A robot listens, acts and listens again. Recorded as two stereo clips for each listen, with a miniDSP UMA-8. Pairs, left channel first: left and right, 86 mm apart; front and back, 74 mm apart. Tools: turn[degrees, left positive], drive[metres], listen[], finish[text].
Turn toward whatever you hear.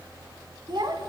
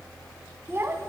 Thought: The child speaking: 125° right.
Action: turn[-125]
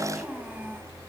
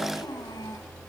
Thought: The child speaking is now 20° right.
Action: turn[-20]
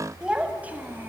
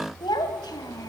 Thought: The child speaking is now 25° right.
Action: turn[-25]
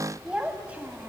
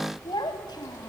Thought: The child speaking is now 20° right.
Action: turn[-20]
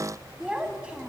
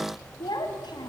Thought: The child speaking is now 10° right.
Action: turn[-10]
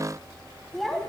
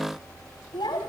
Action: finish[Found it: a child speaking, straight ahead.]